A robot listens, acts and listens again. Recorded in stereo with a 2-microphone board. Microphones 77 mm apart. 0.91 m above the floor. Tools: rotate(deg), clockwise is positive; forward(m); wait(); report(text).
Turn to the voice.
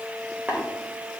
wait()
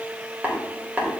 wait()
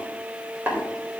report("I can't make out anyone speaking, only tapping.")